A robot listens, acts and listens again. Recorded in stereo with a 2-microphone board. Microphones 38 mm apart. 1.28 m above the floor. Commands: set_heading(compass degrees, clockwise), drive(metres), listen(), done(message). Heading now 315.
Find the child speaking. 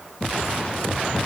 listen()
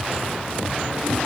listen()
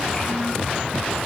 set_heading(300)
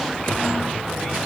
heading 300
listen()
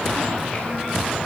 listen()
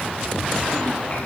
done("I heard a child speaking, but can't make it out now. It was about straight ahead or 150° left.")